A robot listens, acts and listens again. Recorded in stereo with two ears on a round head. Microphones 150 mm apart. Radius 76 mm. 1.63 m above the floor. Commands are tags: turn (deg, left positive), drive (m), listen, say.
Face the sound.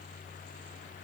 <listen/>
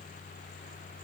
<listen/>
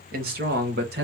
<turn deg="-65"/>
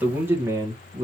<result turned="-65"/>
<turn deg="-20"/>
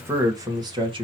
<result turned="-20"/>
<turn deg="-30"/>
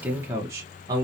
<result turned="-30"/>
<turn deg="-25"/>
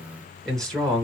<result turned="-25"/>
<say>Facing the man speaking.</say>